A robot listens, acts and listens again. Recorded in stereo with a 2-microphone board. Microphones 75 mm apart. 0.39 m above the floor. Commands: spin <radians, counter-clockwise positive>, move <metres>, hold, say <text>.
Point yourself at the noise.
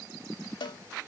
spin 1.57
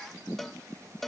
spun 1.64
say Facing the cowbell.